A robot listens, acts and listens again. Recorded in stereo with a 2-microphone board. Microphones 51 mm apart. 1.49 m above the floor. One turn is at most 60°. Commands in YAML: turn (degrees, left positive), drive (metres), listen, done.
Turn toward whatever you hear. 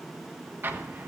turn: -45
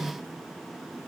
listen: true
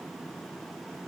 done: "I heard an explosion, but can't make it out now. It was about straight ahead or 90° right."